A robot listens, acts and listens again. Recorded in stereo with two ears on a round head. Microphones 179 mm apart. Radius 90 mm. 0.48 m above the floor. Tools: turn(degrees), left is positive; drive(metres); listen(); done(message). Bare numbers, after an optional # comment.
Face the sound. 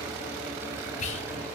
# The whispering: about 35° left or 145° left.
turn(35)
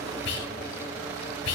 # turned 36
# So it is at 105° left.
turn(105)
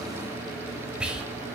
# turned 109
done("Found it: whispering, straight ahead, 1 to 2 m away.")